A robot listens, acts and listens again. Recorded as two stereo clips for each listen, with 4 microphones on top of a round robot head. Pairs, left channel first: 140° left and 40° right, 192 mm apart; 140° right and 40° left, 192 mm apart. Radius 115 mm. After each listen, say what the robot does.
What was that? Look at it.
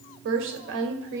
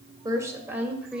Turn 50° right.
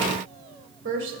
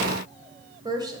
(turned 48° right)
Turn 35° right.
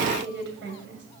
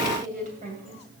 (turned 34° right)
Turn 15° right.
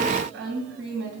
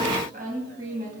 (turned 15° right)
Turn 15° right.
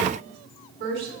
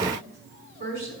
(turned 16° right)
Found it: a woman speaking, straight ahead.